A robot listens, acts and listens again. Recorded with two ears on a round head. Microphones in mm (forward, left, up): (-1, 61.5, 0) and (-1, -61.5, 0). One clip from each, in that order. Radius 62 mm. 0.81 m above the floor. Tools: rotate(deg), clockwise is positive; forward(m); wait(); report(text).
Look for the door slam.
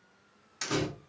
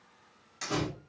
rotate(-25)
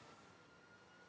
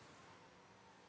wait()
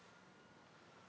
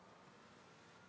report("I heard a door slam, but can't make it out now. It was about straight ahead or 130° left.")